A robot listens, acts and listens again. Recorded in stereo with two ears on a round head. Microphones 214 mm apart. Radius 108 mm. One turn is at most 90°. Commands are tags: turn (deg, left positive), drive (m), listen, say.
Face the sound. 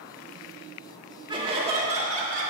<turn deg="-35"/>
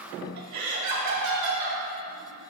<turn deg="-90"/>
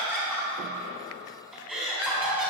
<say>Facing the laughter.</say>